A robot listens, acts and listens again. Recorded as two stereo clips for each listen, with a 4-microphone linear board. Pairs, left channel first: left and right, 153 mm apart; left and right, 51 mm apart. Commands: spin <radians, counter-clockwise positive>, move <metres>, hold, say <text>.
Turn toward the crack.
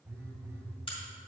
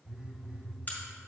spin 0.61
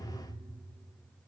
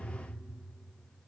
hold
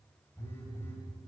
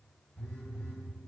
say I heard a crack, but can't make it out now. It was about straight ahead or 110° left.